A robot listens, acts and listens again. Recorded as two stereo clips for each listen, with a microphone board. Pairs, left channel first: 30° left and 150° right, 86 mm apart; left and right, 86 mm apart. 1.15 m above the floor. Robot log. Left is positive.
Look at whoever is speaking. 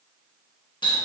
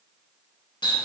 cmd idle
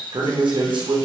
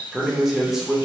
note: The man speaking: 175° right.
cmd yaw -175
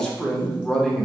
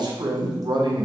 note: The man speaking is now 55° right.
cmd yaw -55
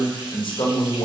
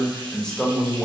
note: The man speaking is now 10° left.
cmd yaw +10
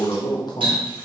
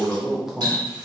end: Found it: a man speaking, straight ahead, under 1 m away.